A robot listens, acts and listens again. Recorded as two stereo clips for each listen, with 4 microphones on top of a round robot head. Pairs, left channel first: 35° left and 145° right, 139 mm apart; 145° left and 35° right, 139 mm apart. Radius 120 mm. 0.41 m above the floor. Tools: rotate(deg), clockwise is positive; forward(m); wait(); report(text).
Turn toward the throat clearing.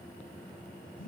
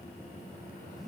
wait()
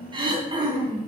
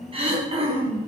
rotate(85)
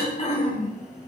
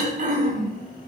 rotate(10)
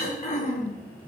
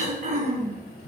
report("Facing the throat clearing.")